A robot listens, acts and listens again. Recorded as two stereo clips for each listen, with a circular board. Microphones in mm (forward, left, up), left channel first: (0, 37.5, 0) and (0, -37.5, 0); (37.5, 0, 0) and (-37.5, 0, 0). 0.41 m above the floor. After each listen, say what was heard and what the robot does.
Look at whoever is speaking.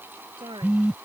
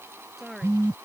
The woman speaking: 95° right. Turn 95° right.
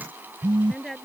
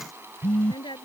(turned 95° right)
Found it: a woman speaking, straight ahead.